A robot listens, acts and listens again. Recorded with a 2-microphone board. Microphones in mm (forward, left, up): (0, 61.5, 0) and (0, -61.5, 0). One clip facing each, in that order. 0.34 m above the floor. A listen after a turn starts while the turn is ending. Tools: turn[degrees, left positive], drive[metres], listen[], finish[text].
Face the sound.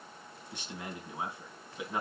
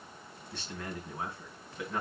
Action: turn[30]
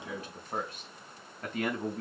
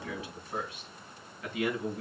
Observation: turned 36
Thought: So it is at 130° left.
Action: turn[130]
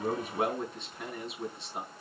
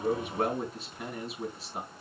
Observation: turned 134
Action: finish[Facing the man speaking.]